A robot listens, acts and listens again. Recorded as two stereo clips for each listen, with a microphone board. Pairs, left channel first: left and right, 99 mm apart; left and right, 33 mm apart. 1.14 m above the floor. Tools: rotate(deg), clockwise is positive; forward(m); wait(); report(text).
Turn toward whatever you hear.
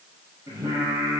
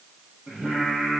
rotate(40)
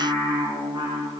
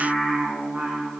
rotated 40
rotate(105)
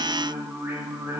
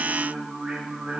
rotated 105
rotate(25)
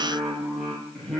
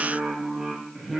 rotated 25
report("Found it: singing, straight ahead, over 4 m away.")